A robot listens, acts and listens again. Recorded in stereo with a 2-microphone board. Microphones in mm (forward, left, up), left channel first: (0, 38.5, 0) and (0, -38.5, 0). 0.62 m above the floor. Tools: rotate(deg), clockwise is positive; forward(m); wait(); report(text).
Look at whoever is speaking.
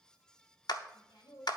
rotate(-65)
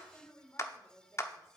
rotate(-40)
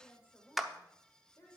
rotate(-35)
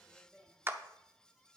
rotate(-10)
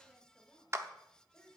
report("Facing the woman speaking, 2 to 4 m away.")